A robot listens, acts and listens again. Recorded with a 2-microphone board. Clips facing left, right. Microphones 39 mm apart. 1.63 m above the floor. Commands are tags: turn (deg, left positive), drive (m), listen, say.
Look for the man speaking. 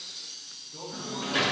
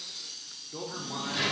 <turn deg="-70"/>
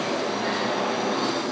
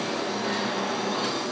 <listen/>
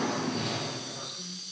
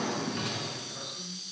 <turn deg="-25"/>
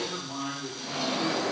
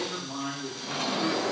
<turn deg="10"/>
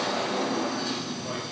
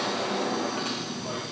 <listen/>
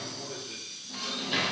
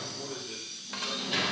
<say>Found it: a man speaking, straight ahead.</say>